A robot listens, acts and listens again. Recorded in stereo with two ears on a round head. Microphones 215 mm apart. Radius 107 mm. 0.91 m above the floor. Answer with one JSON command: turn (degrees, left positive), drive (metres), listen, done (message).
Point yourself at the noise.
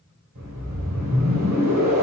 {"turn": -90}
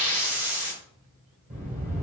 {"done": "Facing the whoosh."}